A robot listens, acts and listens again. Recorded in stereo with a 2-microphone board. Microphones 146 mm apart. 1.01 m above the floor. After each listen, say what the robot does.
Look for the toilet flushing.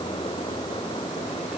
Keep listening.
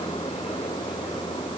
Keep listening.
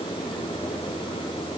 I can't make out a toilet flushing to turn to.